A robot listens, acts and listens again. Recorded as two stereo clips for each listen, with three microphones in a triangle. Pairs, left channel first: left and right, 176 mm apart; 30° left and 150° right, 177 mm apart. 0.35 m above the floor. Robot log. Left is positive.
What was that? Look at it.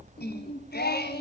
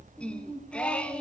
note: The singing: 115° left.
cmd yaw +115
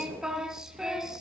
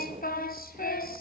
end: Facing the singing, 1 to 2 m away.